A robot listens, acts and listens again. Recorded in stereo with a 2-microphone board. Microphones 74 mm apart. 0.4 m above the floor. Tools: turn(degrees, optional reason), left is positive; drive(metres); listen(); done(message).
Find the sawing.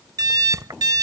listen()
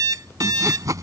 turn(degrees=-50, reason="The sawing: about 50° right or 130° right.")
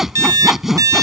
done("Facing the sawing.")